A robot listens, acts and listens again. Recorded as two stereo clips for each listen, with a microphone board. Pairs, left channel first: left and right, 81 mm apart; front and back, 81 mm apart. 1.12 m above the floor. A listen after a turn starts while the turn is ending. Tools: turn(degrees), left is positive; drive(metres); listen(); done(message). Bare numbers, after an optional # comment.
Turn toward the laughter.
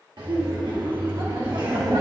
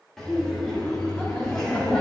# The laughter: 80° right.
turn(-80)
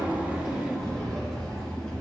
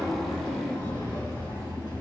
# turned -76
done("Found it: laughter, straight ahead, 2 to 4 m away.")